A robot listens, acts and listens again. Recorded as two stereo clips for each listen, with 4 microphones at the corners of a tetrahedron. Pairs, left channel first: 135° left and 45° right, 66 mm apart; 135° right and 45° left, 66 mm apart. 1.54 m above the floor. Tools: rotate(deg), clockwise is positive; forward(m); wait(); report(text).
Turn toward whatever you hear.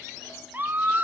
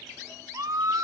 rotate(-15)
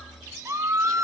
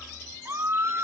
report("Facing the scream, 1 to 2 m away.")